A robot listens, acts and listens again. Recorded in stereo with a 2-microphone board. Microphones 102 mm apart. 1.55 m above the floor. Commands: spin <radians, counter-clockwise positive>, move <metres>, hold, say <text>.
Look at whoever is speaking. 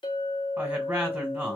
spin -0.26
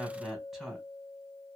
say Found it: a woman speaking, straight ahead, 1 to 2 m away.